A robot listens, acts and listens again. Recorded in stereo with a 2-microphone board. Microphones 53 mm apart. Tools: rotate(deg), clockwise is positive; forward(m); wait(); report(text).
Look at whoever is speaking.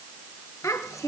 rotate(-90)
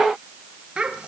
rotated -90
rotate(20)
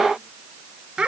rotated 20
rotate(20)
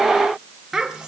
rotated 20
rotate(10)
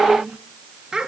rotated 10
rotate(10)
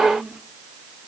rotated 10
report("Found it: a child speaking, straight ahead.")